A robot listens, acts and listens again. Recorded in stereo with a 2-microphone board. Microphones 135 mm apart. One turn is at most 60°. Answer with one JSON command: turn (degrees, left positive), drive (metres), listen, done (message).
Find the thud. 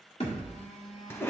{"turn": 45}
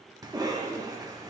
{"listen": true}
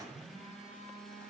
{"done": "I heard a thud, but can't make it out now. It was about straight ahead or 90° left."}